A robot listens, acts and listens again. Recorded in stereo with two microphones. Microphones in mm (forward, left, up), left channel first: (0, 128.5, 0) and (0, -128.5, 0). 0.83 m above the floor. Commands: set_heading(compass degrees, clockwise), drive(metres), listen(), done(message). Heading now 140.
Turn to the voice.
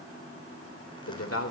set_heading(75)
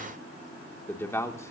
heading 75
set_heading(65)
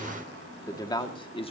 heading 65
set_heading(45)
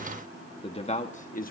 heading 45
set_heading(10)
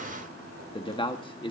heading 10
set_heading(350)
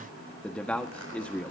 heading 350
done("Facing the man speaking.")